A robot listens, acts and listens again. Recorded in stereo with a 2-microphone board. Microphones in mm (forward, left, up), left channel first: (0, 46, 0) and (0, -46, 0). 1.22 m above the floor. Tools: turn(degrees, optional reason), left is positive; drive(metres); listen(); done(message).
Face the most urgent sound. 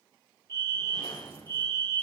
turn(degrees=30, reason="The fire alarm: about 30° left or 150° left.")
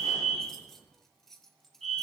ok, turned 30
done("Facing the fire alarm, over 4 m away.")